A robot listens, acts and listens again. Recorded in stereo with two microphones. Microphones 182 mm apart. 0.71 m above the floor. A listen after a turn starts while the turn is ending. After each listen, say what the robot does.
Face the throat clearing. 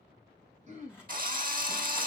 Turn 40° right.
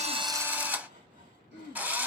Turn 100° right.
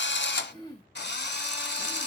Turn 25° left.
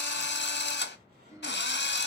Turn 15° right.
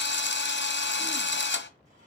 Keep listening.
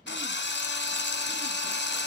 Keep listening.
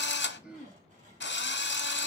Found it: throat clearing, straight ahead, 2 to 4 m away.